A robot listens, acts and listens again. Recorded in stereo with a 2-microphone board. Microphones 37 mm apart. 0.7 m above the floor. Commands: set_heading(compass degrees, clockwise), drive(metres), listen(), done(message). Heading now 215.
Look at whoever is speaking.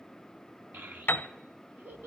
set_heading(275)
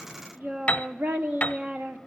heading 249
set_heading(319)
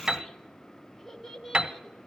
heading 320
done("Facing the child speaking.")